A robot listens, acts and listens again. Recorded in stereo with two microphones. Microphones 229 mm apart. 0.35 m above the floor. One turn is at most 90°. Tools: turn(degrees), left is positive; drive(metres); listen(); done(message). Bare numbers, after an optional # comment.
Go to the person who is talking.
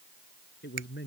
# The man speaking: about 50° left or 130° left.
turn(50)
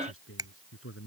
# So it is at 80° left.
turn(80)
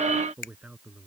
drive(1.0)
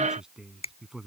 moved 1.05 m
drive(1.0)
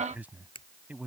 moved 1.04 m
# The man speaking is now 10° right.
turn(-10)
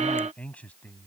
drive(1.0)
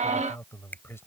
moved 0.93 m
# The man speaking is now 15° left.
turn(15)
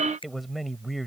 drive(1.0)
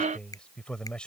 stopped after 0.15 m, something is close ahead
done("I am next to the man speaking.")